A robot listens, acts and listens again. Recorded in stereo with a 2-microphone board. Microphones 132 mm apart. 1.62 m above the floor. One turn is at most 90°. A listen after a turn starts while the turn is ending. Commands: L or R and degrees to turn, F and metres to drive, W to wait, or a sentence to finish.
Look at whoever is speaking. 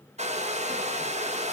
W
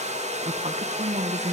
R55
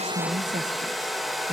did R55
R65
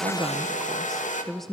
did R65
Facing the woman speaking.